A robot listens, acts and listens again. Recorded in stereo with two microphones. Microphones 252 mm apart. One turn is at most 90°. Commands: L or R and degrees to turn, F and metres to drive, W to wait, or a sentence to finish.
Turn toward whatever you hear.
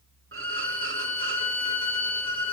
R55
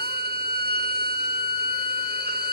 R50
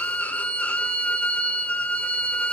Facing the violin, under 1 m away.